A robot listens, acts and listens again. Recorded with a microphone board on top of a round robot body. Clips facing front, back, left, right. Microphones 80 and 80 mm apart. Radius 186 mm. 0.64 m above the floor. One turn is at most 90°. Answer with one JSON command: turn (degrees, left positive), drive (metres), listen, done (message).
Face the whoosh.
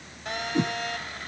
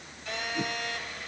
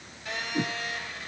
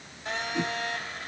{"turn": 10}
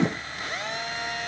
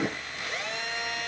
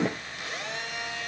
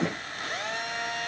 {"done": "Facing the whoosh."}